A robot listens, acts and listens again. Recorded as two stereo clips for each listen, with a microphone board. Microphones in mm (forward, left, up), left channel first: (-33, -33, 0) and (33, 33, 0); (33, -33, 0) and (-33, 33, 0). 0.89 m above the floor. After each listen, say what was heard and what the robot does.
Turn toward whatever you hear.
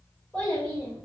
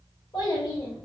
The child speaking: 70° right. Turn 70° right.
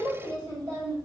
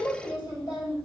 Facing the child speaking.